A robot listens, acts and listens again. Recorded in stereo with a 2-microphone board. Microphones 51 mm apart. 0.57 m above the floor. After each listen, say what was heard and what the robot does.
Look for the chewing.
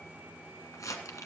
Keep listening.
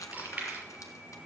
The chewing: about 25° right or 155° right. Turn 25° right.
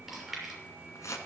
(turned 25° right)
Found it: chewing, straight ahead, over 4 m away.